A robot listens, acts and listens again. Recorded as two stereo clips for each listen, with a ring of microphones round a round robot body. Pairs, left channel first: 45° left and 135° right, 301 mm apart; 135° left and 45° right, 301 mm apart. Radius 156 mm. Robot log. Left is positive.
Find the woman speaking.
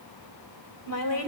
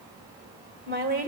note: The woman speaking: 15° left.
cmd yaw +15
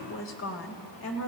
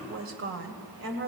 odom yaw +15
end: Facing the woman speaking, 2 to 4 m away.